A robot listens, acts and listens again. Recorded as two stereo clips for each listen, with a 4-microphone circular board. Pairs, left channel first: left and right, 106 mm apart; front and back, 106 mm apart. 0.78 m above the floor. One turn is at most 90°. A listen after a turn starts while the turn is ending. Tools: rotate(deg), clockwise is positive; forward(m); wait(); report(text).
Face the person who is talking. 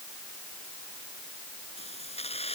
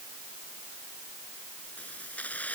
wait()
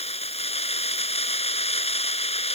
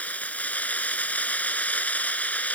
wait()
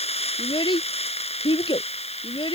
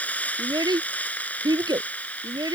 rotate(-90)
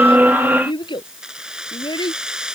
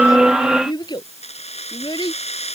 rotate(-45)
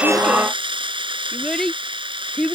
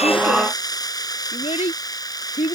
report("Facing the child speaking.")